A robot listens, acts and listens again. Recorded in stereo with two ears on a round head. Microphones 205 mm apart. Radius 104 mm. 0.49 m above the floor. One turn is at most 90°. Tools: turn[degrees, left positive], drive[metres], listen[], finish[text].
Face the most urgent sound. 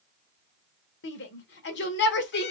Thought: The shout: about 50° left or 130° left.
Action: turn[50]
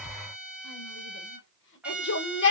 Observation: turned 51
Thought: So it is at 65° left.
Action: turn[65]
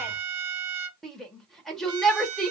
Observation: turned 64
Action: finish[Facing the shout.]